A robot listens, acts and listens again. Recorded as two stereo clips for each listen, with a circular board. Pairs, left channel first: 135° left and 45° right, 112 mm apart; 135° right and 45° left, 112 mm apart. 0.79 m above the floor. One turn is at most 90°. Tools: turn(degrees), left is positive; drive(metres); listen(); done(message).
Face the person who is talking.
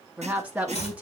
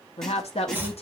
turn(degrees=-90)
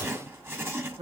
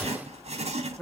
turn(degrees=-50)
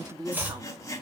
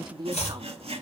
done("Facing the woman speaking.")